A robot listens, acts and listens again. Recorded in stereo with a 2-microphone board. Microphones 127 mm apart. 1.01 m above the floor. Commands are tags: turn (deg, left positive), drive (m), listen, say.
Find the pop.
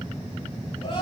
<listen/>
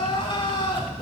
<listen/>
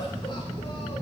<say>I can't make out a pop to turn to.</say>